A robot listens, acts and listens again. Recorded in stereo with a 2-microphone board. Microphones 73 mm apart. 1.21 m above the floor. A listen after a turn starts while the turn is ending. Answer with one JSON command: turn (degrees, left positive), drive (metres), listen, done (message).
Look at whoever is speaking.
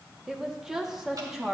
{"turn": -30}
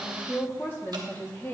{"turn": 30}
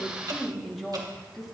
{"done": "Facing the woman speaking."}